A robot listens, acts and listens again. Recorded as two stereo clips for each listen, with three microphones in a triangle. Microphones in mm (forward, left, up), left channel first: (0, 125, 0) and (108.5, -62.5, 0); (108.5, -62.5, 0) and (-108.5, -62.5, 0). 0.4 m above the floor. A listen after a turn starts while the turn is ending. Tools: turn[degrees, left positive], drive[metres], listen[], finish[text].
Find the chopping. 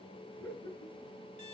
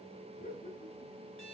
Action: listen[]
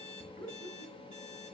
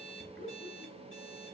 Action: listen[]
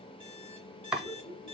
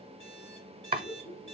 Thought: The chopping: 145° right.
Action: turn[-145]
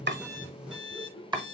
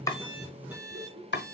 Action: finish[Found it: chopping, straight ahead.]